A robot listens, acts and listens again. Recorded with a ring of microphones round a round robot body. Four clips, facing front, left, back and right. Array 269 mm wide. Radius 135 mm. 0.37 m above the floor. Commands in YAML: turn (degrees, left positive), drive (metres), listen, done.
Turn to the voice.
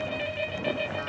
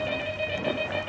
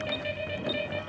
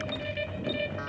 listen: true
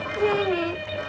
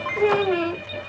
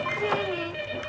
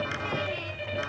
turn: 65
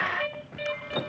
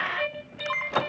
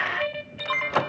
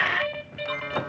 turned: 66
listen: true
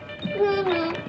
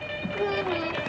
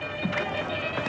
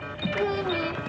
done: "Facing the child speaking."